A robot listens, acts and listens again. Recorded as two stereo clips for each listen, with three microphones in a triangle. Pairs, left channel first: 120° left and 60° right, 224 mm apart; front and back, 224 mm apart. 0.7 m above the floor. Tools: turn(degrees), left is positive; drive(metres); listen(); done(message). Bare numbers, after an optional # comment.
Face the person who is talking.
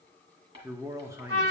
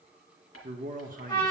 # The man speaking: 135° right.
turn(-135)
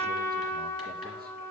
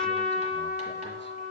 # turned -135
listen()
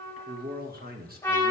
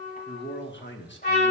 # The man speaking is now 20° right.
turn(-20)
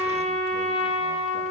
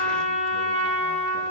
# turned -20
listen()
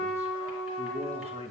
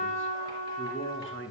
done("Found it: a man speaking, straight ahead.")